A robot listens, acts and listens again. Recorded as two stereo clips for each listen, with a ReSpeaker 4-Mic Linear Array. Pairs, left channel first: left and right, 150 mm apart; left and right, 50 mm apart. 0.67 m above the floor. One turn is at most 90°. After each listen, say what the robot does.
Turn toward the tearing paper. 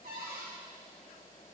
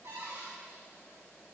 Keep listening.
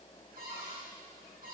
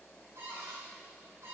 Keep listening.
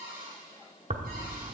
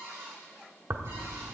Turn 60° right.
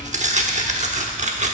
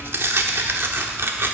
Turn 55° right.
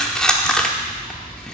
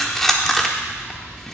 Found it: tearing paper, straight ahead.